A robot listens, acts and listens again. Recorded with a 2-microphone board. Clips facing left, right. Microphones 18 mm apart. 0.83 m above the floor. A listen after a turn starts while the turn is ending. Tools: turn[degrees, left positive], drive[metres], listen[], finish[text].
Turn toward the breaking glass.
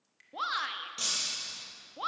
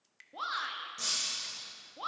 Thought: The breaking glass: about 45° left or 135° left.
Action: turn[45]
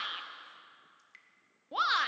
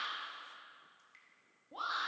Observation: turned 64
Action: listen[]
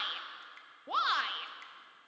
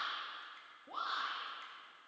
Action: finish[I heard breaking glass, but can't make it out now. It was about 20° right or 75° left.]